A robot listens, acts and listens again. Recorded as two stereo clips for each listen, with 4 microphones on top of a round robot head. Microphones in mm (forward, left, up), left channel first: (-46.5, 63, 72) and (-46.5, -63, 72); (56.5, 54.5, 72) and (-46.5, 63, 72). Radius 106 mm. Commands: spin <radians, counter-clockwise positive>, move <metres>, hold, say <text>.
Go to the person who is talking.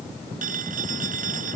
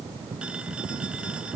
hold
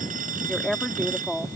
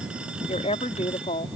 move 1.0
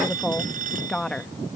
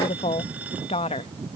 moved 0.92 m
move 1.0
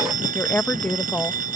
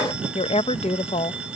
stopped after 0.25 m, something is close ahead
spin 0.17
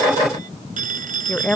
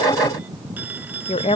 say Arrived at the woman speaking, straight ahead.